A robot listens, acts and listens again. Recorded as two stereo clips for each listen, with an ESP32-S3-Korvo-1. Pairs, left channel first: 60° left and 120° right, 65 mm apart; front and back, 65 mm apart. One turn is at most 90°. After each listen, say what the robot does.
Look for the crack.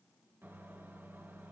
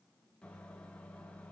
Keep listening.
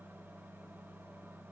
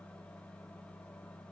Keep listening.
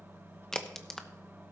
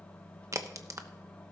Turn 90° left.
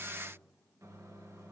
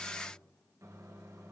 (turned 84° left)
Turn 55° left.
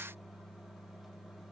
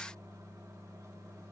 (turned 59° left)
Facing where the crack came from. I can't hear it now.